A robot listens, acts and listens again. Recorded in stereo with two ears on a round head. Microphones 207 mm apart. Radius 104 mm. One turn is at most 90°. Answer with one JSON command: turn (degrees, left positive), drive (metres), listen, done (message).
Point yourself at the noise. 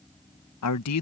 {"turn": 90}
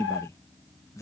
{"turn": 15}
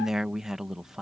{"done": "Facing the man speaking."}